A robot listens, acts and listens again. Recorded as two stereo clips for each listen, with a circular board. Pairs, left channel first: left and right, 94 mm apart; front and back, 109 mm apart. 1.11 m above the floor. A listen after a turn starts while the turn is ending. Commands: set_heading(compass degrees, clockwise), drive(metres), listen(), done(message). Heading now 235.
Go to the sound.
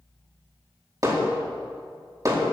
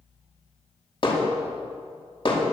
set_heading(275)
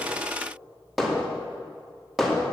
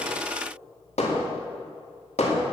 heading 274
drive(1.0)
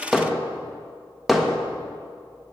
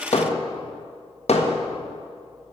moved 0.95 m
drive(1.0)
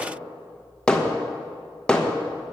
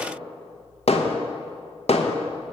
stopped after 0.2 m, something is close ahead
set_heading(264)
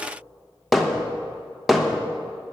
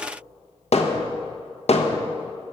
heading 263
done("Arrived at the hammering, straight ahead.")